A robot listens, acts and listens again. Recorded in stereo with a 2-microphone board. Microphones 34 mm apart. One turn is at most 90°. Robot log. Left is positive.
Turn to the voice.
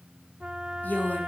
note: The woman speaking: about 65° left or 115° left.
cmd yaw +65
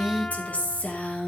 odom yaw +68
note: So it is at 45° left.
cmd yaw +45
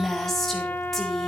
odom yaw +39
note: The woman speaking is now 10° left.
cmd yaw +10
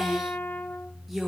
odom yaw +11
end: Facing the woman speaking, over 4 m away.